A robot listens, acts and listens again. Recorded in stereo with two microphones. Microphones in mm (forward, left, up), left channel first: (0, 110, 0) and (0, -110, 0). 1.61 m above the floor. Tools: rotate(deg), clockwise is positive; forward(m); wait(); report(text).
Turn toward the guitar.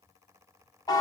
wait()
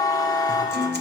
rotate(50)
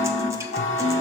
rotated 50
rotate(15)
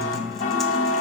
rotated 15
report("Found it: a guitar, straight ahead, under 1 m away.")